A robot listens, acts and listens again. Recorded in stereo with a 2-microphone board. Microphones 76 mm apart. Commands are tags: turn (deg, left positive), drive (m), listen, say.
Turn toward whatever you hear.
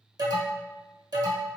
<turn deg="-60"/>
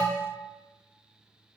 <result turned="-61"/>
<turn deg="-25"/>
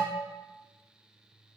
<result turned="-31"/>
<turn deg="10"/>
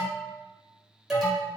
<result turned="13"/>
<say>Found it: an alarm, straight ahead.</say>